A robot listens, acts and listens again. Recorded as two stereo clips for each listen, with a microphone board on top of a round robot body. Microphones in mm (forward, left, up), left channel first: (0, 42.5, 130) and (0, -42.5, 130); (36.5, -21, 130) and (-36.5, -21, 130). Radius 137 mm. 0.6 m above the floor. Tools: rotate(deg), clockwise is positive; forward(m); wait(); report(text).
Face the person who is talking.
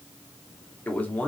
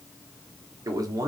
rotate(-160)
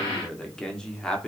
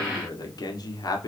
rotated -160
rotate(-10)
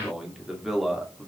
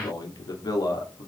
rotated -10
report("Found it: a man speaking, straight ahead, 1 to 2 m away.")